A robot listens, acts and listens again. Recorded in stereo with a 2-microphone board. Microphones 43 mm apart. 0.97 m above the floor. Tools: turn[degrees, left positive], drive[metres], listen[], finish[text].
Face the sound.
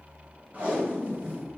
Thought: The tape being pulled: about 30° right or 150° right.
Action: turn[-30]
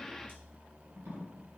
Thought: So it is at 120° right.
Action: turn[-120]
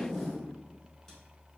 Action: finish[Facing the tape being pulled, 1 to 2 m away.]